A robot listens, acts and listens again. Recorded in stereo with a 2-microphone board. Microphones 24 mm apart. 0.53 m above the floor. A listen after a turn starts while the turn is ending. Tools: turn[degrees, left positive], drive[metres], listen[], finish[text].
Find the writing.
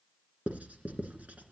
Action: turn[-90]
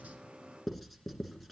Action: finish[Facing the writing, 2 to 4 m away.]